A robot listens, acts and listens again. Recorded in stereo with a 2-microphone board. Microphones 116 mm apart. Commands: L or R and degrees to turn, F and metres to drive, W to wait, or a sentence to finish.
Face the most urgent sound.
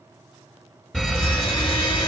L30
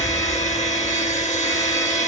L150
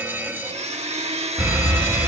R20
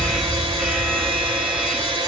Facing the fire alarm.